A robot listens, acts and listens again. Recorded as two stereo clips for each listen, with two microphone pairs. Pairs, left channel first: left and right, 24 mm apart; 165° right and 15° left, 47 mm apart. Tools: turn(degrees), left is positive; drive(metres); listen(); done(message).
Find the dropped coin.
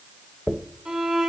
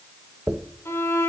turn(degrees=55)
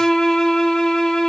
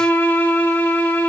done("Facing where the dropped coin came from. I can't hear it now.")